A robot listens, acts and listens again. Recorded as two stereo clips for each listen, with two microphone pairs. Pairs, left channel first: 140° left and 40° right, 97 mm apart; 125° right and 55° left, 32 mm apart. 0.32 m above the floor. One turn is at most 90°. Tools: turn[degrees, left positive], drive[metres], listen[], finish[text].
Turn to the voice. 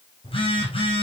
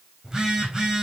Action: listen[]
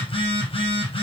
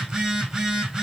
Action: listen[]
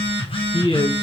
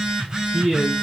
Thought: The man speaking: 165° left.
Action: turn[90]
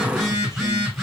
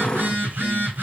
Thought: Nothing new. It was at 75° left.
Action: turn[75]
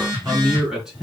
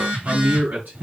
Thought: The man speaking is now 45° left.
Action: turn[45]
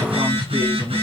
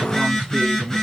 Thought: The man speaking is now 10° right.
Action: turn[-10]
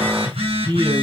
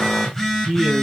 Action: finish[Found it: a man speaking, straight ahead, 2 to 4 m away.]